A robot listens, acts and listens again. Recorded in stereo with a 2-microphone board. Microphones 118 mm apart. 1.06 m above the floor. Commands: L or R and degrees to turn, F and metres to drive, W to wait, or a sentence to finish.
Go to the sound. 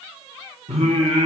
R90
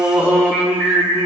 R10
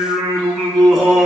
F1.0
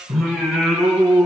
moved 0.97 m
F1.0
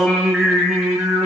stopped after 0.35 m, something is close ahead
Something is in my way. I am facing the singing but have not reached it.